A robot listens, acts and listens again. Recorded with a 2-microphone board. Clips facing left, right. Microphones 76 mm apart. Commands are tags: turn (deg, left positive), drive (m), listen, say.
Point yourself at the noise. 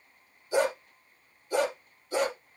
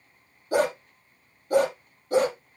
<turn deg="-50"/>
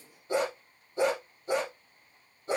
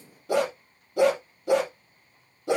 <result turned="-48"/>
<turn deg="-90"/>
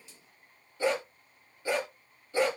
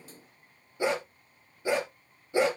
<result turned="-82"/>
<turn deg="-15"/>
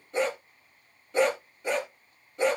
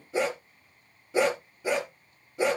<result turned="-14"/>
<say>Facing the dog barking.</say>